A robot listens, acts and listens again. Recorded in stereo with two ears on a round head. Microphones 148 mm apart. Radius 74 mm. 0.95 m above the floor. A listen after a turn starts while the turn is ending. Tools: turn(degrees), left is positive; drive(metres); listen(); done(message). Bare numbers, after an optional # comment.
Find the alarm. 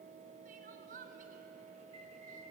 listen()
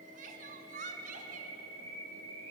listen()
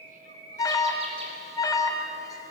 # The alarm: about 20° left or 160° left.
turn(20)
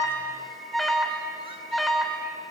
done("Found it: an alarm, straight ahead, 2 to 4 m away.")